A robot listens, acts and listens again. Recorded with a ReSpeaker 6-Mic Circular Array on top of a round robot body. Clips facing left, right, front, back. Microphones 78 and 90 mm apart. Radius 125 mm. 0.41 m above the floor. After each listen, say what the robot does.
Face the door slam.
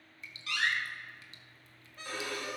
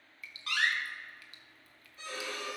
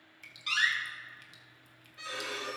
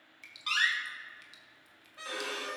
Turn 135° right.
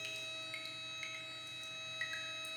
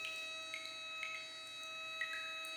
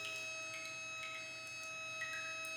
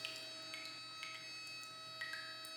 I heard a door slam from this way, but can't make it out now.